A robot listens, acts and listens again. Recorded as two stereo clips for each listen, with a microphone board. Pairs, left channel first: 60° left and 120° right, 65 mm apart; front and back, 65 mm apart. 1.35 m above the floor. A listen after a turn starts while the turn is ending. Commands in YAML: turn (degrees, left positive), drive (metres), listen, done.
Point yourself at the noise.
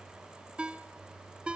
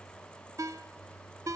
turn: 170
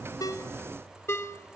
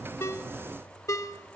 turn: 20
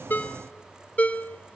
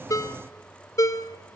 done: "Facing the ringtone, 1 to 2 m away."